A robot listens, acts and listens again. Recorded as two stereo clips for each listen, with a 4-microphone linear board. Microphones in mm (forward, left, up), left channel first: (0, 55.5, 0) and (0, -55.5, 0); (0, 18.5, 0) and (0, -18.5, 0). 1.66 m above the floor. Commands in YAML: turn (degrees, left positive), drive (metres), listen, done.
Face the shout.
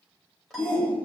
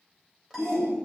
turn: 15
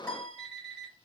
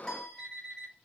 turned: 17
listen: true
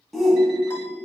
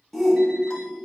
done: "Found it: a shout, straight ahead."